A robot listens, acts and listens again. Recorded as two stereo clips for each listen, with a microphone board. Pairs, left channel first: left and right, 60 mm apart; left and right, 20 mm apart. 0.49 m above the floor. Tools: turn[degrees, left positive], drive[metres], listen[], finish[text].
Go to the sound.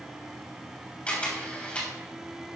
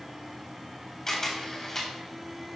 Thought: The camera shutter: about 20° left or 160° left.
Action: turn[20]
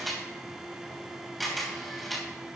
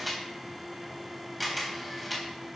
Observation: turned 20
Action: drive[1.0]
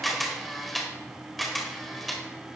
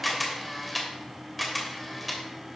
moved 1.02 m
Action: drive[1.0]
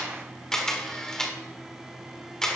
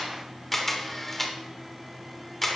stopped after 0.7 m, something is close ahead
Thought: The camera shutter is now 15° left.
Action: turn[15]
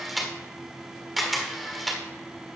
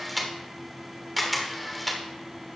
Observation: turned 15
Action: finish[I am next to the camera shutter.]